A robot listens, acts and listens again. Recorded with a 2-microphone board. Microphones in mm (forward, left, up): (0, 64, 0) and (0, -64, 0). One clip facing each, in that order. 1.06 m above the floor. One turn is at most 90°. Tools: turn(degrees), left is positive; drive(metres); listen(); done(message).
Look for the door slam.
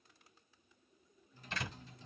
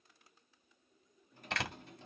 turn(degrees=-75)
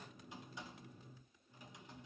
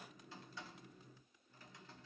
listen()
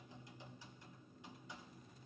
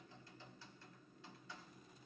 done("I heard a door slam, but can't make it out now. It was about straight ahead or 30° right.")